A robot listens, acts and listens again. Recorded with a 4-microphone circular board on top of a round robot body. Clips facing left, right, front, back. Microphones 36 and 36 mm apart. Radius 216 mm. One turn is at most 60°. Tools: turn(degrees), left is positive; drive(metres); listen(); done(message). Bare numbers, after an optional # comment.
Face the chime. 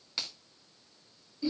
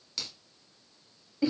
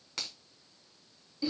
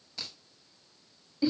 listen()
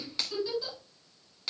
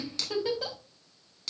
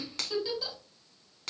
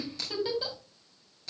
listen()
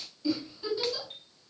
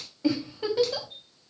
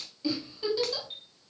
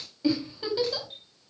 # The chime: 60° left.
turn(60)
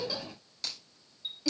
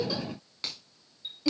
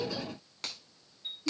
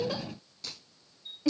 done("Found it: a chime, straight ahead, 2 to 4 m away.")